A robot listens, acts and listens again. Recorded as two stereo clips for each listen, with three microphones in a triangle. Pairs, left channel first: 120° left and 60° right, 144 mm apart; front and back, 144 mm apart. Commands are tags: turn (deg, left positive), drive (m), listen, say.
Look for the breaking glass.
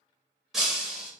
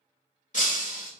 <turn deg="30"/>
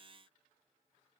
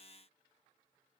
<say>I heard breaking glass from this way, but can't make it out now.</say>